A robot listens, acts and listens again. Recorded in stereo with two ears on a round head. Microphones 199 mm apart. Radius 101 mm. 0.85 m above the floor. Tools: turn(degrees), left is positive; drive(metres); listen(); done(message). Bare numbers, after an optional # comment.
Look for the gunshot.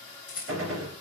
# The gunshot: about 70° right or 110° right.
turn(-70)
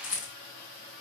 listen()
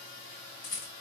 done("I heard a gunshot, but can't make it out now. It was about straight ahead or 40° right.")